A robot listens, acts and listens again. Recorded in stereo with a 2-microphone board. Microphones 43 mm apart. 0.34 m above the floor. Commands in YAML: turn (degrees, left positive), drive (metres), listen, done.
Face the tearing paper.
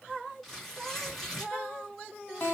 turn: 30
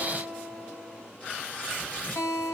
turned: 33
turn: 150
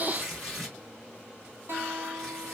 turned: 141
done: "Found it: tearing paper, straight ahead, 2 to 4 m away."